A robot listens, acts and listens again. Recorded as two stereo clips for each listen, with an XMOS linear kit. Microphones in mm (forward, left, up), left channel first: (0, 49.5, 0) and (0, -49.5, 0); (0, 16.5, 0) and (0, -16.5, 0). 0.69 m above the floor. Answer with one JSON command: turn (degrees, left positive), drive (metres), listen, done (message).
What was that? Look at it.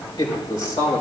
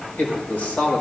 {"turn": 50}
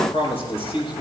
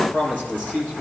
{"turn": 80}
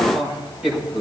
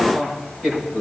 {"turn": -10}
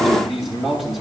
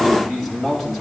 {"done": "Found it: a man speaking, straight ahead."}